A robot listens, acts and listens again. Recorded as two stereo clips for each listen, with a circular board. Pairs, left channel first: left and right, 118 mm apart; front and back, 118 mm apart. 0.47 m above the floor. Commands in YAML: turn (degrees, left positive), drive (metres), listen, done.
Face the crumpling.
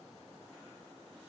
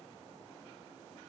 listen: true
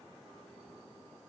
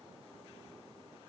listen: true
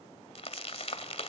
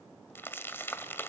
turn: 70
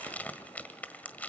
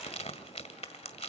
turn: 15
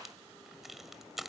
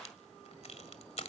done: "Found it: crumpling, straight ahead, 1 to 2 m away."